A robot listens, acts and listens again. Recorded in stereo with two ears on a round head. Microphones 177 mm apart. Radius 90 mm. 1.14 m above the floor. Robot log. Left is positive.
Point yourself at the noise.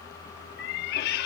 note: The cat meowing: about 50° left or 130° left.
cmd yaw +50
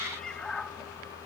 end: Facing the cat meowing.